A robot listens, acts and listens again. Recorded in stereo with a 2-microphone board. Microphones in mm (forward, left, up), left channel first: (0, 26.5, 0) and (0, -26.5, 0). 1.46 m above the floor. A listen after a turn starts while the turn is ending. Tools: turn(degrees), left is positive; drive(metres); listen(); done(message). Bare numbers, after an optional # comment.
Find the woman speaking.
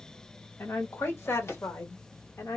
# The woman speaking: about 70° left or 110° left.
turn(70)
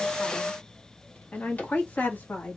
# So it is at 40° left.
turn(40)
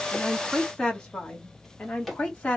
# The woman speaking is now 25° left.
turn(25)
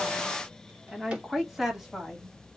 done("Facing the woman speaking.")